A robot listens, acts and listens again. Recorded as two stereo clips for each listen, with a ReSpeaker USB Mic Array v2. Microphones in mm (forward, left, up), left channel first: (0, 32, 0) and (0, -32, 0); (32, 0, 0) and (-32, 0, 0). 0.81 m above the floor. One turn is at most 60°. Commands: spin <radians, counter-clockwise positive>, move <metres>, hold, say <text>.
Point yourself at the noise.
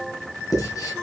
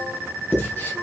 spin 1.05
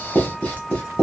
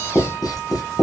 spin 0.44
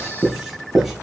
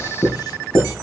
say Found it: writing, straight ahead.